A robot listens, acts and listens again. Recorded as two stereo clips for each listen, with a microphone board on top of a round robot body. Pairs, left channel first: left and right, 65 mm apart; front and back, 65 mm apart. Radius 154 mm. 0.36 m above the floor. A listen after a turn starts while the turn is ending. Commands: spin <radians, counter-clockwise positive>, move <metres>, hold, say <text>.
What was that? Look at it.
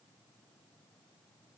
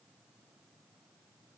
hold
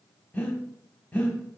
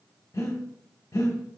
spin 0.44
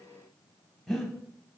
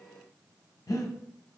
spin 0.17
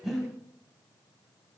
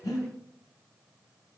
say Facing the breathing.